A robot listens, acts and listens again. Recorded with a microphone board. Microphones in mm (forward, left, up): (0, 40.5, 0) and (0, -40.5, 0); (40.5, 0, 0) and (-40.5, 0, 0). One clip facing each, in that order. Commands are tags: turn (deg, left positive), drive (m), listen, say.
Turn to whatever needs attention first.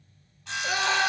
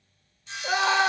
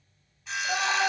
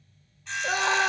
<turn deg="-150"/>
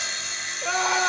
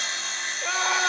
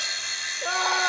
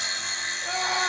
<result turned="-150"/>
<say>Facing the scream.</say>